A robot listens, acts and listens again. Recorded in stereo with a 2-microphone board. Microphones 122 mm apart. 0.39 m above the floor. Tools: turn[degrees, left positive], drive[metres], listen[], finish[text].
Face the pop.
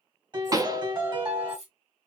Thought: The pop: about 30° right or 150° right.
Action: turn[-30]
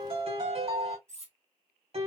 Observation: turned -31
Action: listen[]
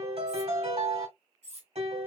Action: finish[I heard a pop, but can't make it out now. It was about straight ahead or 120° right.]